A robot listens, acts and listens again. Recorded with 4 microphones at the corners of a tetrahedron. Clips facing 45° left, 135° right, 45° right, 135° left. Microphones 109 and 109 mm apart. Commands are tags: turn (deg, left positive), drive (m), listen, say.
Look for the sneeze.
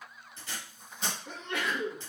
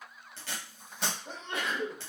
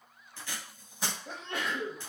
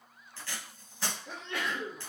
<turn deg="-80"/>
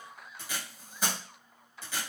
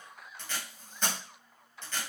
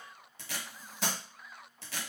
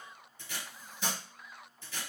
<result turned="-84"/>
<say>I heard a sneeze from this way, but can't make it out now.</say>